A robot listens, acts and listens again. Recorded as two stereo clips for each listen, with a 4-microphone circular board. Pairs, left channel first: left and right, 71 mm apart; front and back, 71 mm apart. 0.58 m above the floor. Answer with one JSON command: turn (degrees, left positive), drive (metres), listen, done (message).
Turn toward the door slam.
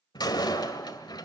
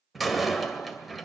{"turn": 90}
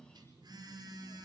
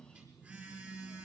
{"done": "I heard a door slam from this way, but can't make it out now."}